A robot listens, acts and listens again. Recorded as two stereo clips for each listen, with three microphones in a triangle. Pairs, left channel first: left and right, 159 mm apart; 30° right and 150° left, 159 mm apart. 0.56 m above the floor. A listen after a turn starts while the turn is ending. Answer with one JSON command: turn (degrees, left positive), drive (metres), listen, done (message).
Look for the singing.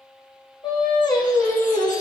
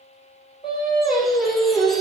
{"turn": 35}
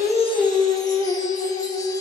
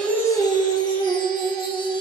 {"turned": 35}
{"turn": 10}
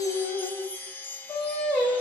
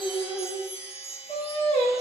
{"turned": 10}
{"done": "Facing the singing, over 4 m away."}